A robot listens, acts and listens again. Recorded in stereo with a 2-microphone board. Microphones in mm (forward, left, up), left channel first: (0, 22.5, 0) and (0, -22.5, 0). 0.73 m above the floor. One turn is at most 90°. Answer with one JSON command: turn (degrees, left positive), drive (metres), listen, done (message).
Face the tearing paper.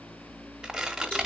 {"turn": -30}
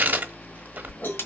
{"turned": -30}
{"turn": -90}
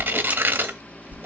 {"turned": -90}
{"turn": -50}
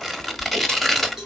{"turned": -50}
{"done": "Found it: tearing paper, straight ahead, under 1 m away."}